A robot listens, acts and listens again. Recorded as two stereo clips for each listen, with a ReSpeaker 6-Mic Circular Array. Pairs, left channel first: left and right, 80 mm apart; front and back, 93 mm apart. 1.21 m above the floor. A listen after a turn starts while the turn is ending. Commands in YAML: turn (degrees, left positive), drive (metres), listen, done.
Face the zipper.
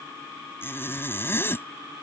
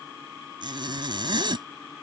turn: 150
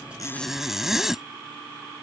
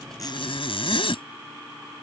done: "Facing the zipper."